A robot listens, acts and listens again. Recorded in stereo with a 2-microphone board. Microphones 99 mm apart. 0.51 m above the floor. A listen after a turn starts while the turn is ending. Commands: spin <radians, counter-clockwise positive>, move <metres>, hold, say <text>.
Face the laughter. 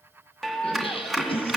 spin 1.22
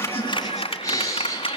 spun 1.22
spin 0.52
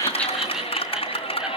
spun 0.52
spin -0.17
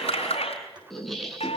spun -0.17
say Found it: laughter, straight ahead, over 4 m away.